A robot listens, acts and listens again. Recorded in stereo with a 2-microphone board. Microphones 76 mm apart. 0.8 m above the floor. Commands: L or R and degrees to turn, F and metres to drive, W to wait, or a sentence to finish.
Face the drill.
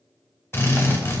L35
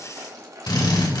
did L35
L105
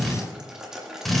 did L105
Found it: a drill, straight ahead, 2 to 4 m away.